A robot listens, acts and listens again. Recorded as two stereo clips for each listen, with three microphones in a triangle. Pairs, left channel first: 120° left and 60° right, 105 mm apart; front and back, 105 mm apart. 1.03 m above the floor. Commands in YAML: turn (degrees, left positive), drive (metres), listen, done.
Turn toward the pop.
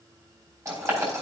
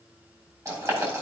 listen: true
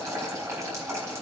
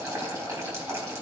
listen: true
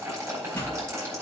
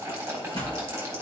turn: -175
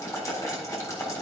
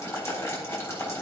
done: "I heard a pop from this way, but can't make it out now."